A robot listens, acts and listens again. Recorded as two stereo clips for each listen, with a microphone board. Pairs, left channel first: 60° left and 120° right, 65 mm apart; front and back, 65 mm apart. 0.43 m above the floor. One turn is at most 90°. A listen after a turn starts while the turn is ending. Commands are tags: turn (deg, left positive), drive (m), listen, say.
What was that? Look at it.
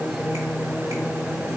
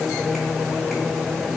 <listen/>
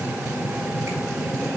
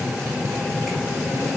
<listen/>
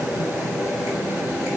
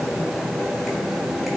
<say>I can't make out anything.</say>